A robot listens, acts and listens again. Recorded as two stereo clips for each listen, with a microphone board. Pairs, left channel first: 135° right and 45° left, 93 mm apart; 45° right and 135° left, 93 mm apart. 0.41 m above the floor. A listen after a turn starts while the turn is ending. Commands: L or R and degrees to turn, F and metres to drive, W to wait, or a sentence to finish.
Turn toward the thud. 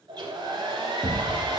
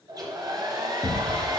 R40
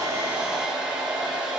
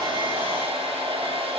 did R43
I heard a thud from this way, but can't make it out now.